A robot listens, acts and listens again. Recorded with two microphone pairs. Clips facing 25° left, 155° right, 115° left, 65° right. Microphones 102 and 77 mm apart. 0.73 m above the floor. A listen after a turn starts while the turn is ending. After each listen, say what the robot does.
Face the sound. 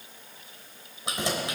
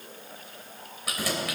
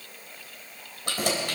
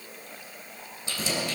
Turn 90° left.
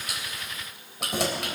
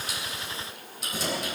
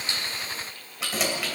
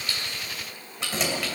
Turn 30° left.
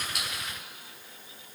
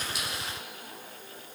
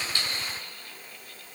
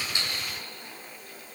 Keep listening.
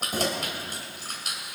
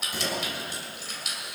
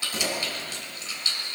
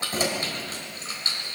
Turn 15° right.
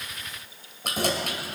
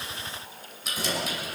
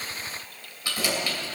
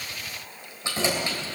Found it: keys jangling, straight ahead.